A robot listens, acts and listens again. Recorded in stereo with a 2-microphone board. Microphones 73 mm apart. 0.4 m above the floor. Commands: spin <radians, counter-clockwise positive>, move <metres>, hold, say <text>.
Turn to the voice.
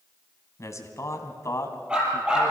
spin 0.70
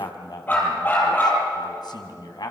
spin 1.66
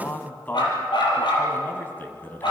spin 0.44
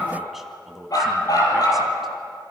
say Found it: a man speaking, straight ahead.